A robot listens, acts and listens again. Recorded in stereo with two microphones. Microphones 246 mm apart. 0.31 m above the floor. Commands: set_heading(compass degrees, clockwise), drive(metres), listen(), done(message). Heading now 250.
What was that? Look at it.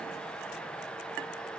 listen()
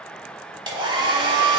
set_heading(270)
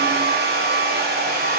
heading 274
set_heading(49)
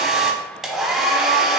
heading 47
done("Found it: a hair dryer, straight ahead.")